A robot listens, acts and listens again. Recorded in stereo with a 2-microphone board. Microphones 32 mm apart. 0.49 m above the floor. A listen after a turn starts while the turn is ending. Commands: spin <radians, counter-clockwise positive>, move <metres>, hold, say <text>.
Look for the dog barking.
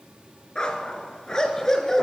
spin 0.52
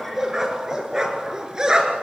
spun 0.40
spin -0.44
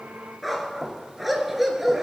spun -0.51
spin -0.17
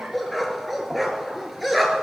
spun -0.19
say Found it: a dog barking, straight ahead, 2 to 4 m away.